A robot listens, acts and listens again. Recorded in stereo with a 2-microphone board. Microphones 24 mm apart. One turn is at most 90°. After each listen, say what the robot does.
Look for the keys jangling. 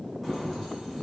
Turn 30° left.
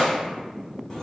Turn 90° left.
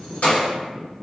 Turn 90° left.
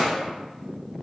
Turn 15° right.
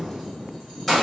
Facing the keys jangling.